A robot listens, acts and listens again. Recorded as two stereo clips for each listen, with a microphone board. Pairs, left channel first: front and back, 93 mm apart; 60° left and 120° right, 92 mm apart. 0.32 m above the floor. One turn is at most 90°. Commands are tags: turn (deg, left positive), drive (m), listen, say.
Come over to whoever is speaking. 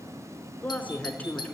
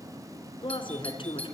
<turn deg="70"/>
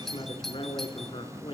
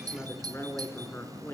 <drive m="1.0"/>
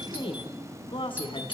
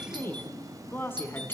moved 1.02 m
<drive m="1.0"/>
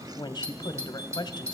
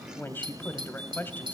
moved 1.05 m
<drive m="1.0"/>
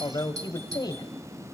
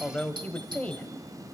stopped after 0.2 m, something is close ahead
<turn deg="-10"/>
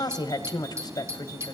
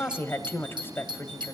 <say>Arrived at the woman speaking, straight ahead.</say>